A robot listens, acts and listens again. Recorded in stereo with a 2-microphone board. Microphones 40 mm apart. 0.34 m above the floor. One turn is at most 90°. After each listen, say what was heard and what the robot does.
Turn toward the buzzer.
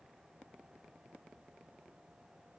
Keep listening.
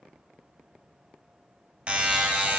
The buzzer: about 30° right or 150° right. Turn 30° right.
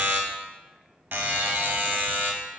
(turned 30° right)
So it is at 115° right. Turn 90° right.
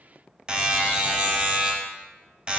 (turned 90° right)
The buzzer is now 25° right. Turn 25° right.
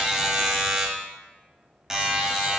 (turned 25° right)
The buzzer is now 10° right. Turn 10° right.
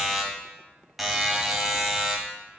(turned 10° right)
Facing the buzzer, under 1 m away.